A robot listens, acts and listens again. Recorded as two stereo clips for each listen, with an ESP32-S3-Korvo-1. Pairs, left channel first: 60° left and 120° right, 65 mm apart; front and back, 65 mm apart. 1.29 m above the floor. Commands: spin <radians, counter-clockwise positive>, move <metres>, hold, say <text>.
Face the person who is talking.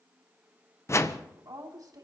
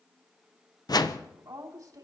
spin -2.53
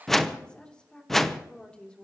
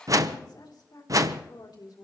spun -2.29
spin -0.26
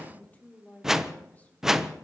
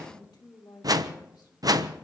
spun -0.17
say Facing the woman speaking, 2 to 4 m away.